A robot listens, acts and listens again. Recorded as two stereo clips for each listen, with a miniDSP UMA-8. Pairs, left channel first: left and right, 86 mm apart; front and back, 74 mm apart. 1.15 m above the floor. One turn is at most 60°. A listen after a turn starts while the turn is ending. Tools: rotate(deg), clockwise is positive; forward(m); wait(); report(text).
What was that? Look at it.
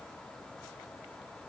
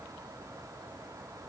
wait()
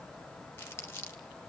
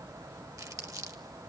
rotate(-60)
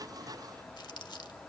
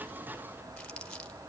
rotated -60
rotate(-60)
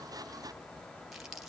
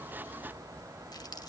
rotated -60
report("Found it: crumpling, straight ahead.")